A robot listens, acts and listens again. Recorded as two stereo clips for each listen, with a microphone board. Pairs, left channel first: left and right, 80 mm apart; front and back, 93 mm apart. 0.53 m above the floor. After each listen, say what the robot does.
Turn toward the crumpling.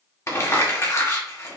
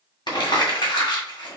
Turn 40° left.
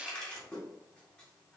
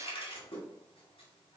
Turn 15° left.
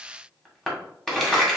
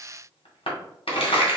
Facing the crumpling, 1 to 2 m away.